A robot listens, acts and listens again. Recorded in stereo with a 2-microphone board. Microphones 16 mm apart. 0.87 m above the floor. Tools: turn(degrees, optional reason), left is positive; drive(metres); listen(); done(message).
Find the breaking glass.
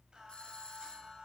listen()
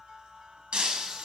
turn(degrees=-90)
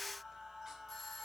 done("Facing where the breaking glass came from. I can't hear it now.")